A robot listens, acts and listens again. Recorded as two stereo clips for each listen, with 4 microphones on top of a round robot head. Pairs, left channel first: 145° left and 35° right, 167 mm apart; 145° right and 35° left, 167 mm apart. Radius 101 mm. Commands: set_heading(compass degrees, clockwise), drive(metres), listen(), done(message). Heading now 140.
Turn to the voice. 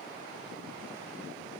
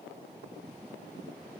listen()
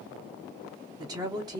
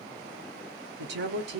set_heading(105)
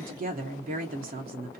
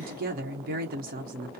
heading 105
done("Found it: a woman speaking, straight ahead, under 1 m away.")